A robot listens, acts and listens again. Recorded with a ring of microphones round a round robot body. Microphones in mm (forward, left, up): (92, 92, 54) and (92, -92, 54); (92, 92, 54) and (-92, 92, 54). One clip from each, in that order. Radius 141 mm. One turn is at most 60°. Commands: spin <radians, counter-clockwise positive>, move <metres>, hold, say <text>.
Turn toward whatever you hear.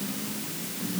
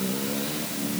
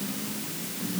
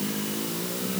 hold
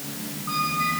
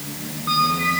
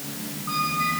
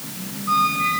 spin -1.05
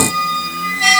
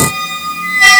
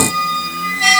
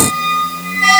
spin -0.87
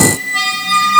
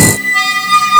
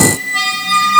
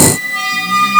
say Facing the squeak, 1 to 2 m away.